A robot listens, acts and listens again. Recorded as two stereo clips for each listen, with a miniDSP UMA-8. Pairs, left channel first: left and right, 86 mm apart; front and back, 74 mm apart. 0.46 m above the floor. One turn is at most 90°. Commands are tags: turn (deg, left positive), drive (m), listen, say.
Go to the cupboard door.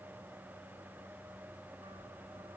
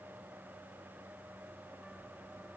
<listen/>
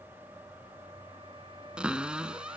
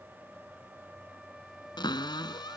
<turn deg="-10"/>
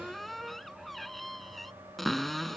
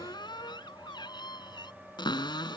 <drive m="1.0"/>
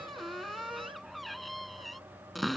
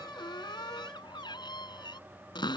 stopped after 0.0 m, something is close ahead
<say>Something is in my way. I am facing the cupboard door but have not reached it.</say>